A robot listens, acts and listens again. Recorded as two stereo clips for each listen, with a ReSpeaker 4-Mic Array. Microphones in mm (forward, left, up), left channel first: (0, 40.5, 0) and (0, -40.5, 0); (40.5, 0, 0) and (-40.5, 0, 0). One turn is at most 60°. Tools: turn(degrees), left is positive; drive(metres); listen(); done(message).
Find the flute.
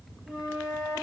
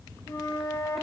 turn(degrees=-10)
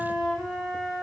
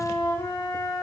done("Found it: a flute, straight ahead, over 4 m away.")